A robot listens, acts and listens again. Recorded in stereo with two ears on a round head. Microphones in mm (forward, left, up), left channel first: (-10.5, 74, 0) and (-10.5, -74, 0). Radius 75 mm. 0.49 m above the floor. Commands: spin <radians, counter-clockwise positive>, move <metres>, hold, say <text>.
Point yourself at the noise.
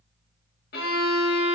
spin 1.13
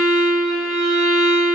say Facing the violin, under 1 m away.